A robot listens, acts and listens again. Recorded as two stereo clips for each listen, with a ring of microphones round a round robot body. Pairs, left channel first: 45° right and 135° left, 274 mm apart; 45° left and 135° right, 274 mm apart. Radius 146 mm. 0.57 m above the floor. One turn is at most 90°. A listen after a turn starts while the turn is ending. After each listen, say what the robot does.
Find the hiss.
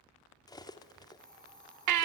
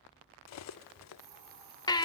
Turn 90° right.
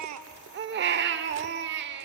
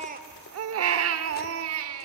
Turn 40° right.
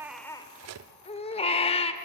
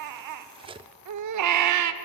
Keep listening.
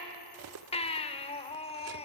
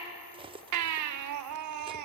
Facing where the hiss came from. I can't hear it now.